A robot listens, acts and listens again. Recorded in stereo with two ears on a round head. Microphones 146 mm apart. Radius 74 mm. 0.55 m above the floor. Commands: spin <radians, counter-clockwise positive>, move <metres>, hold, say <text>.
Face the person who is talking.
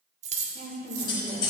spin -0.96
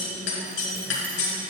hold
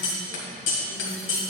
hold
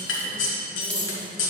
say I heard a woman speaking, but can't make it out now. It was about straight ahead or 70° right.